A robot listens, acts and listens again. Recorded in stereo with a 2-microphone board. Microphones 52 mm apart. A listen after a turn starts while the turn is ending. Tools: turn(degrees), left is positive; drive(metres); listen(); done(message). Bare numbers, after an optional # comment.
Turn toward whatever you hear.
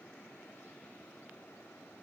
listen()
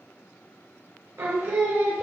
# The singing: about 65° right or 115° right.
turn(-65)
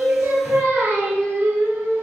# So it is at 45° right.
turn(-45)
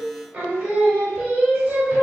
# The singing is now 25° right.
turn(-25)
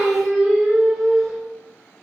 done("Facing the singing.")